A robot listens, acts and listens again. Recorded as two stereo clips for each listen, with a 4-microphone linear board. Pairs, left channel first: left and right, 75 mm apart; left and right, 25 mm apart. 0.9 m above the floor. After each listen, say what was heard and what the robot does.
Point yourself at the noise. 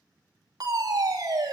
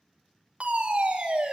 The fire alarm: about 60° right or 120° right. Turn 60° right.
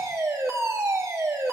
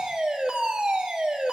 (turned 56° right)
So it is at 45° right. Turn 45° right.
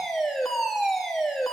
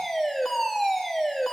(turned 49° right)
Facing the fire alarm, 2 to 4 m away.